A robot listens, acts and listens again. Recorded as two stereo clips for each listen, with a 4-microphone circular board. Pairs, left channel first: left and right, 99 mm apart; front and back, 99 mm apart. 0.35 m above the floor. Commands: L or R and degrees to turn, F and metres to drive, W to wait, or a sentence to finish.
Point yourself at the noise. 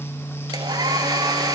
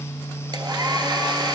R135
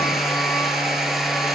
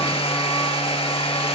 Facing the hair dryer.